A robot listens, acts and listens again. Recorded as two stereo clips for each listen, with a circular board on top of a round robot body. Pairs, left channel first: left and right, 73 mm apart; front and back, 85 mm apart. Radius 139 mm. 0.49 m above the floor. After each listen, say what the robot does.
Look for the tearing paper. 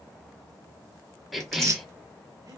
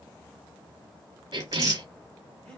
Turn 130° right.
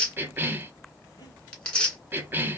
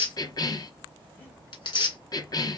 Turn 20° left.
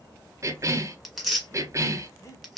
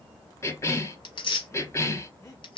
Found it: tearing paper, straight ahead, 2 to 4 m away.